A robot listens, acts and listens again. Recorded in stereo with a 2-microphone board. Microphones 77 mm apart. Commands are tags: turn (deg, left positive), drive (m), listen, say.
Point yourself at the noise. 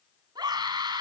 <turn deg="-70"/>
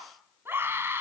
<turn deg="-30"/>
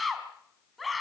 <say>Found it: a scream, straight ahead.</say>